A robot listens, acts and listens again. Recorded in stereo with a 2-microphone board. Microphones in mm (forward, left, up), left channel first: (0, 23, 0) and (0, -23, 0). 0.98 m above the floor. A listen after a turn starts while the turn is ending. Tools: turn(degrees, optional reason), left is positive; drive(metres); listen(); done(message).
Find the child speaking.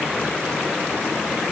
listen()
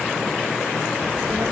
turn(degrees=-90)
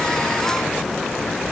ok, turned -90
turn(degrees=20, reason="So it is at 20° left.")
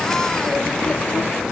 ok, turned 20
turn(degrees=25, reason="The child speaking is now 25° left.")
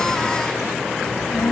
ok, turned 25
turn(degrees=15, reason="The child speaking is now 15° left.")
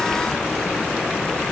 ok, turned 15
done("Found it: a child speaking, straight ahead, 1 to 2 m away.")